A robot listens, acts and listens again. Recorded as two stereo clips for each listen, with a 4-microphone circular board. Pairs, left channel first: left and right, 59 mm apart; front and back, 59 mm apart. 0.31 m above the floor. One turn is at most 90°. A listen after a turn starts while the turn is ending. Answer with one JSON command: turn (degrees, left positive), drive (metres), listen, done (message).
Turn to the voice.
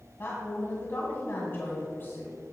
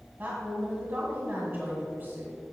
{"turn": 90}
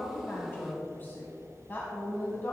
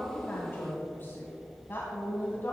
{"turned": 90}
{"turn": 45}
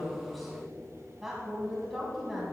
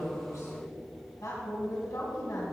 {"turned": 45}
{"done": "Facing the woman speaking."}